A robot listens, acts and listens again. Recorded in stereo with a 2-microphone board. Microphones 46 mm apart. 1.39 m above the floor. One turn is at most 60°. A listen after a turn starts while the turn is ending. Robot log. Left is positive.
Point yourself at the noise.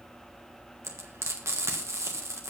cmd yaw -60
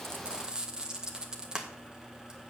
note: So it is at 20° right.
cmd yaw -20
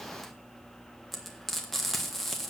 end: Facing the frying.